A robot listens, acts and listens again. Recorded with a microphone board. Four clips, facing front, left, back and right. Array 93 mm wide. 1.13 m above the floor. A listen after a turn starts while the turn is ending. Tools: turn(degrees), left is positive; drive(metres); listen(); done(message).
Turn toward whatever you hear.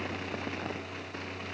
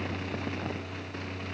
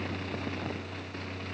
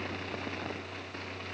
listen()
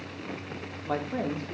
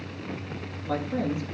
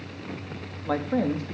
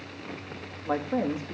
turn(degrees=-155)
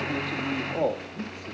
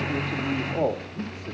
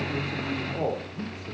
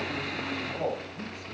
turn(degrees=30)
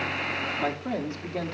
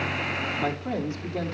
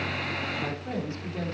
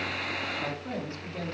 turn(degrees=10)
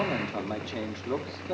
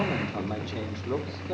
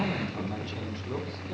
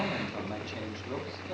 done("Found it: a man speaking, straight ahead, 2 to 4 m away.")